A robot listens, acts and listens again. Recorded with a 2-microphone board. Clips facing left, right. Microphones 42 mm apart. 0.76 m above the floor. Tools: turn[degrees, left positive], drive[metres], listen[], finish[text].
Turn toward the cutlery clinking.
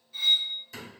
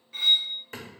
Thought: The cutlery clinking: about 55° right or 125° right.
Action: turn[-55]
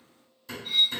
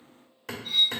Action: finish[Found it: cutlery clinking, straight ahead.]